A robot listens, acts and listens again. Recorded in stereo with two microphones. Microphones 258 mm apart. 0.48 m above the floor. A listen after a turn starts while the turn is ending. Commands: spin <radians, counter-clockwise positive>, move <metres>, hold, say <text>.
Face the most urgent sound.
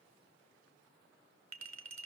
hold
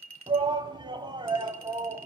spin -0.26
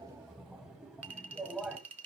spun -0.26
say Facing the shout.